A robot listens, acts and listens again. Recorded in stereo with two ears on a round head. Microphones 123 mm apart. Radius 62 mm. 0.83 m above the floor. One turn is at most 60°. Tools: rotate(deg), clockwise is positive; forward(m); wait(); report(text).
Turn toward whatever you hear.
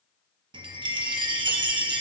rotate(35)
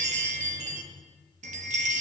rotate(60)
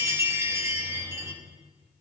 rotate(25)
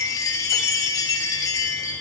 rotate(-30)
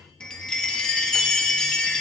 report("Found it: a chime, straight ahead.")